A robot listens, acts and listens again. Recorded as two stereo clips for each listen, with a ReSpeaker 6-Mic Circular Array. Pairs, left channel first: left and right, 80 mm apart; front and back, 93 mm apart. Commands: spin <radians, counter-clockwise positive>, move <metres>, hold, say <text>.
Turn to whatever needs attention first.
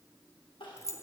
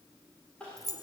spin 1.40
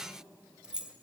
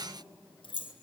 hold
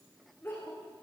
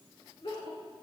spin 0.44
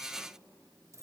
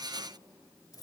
hold
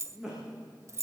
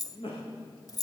say Facing the crying, over 4 m away.